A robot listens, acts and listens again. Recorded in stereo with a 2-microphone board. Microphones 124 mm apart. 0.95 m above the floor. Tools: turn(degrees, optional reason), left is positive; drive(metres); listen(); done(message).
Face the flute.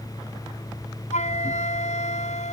turn(degrees=70, reason="The flute: about 70° left or 110° left.")
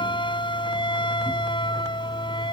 turn(degrees=40, reason="So it is at 40° left.")
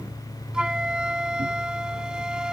done("Facing the flute.")